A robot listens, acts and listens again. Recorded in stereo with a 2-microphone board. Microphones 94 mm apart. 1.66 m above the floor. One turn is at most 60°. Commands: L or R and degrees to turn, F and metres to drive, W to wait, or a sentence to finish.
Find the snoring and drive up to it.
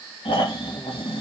L60
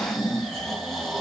F1.0
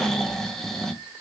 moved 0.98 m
F1.0
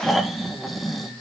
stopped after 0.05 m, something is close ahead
I am next to the snoring.